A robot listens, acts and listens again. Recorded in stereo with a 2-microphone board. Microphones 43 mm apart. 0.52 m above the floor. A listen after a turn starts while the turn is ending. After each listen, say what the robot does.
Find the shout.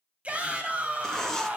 Turn 30° right.
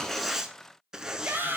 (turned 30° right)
Turn 120° right.
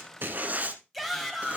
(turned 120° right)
Facing the shout.